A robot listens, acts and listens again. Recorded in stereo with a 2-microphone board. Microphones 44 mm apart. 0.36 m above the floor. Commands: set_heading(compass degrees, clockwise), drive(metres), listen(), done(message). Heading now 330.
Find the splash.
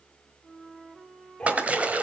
set_heading(5)
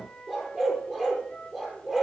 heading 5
listen()
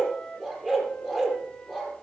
done("I heard a splash, but can't make it out now. It was about straight ahead or 110° right.")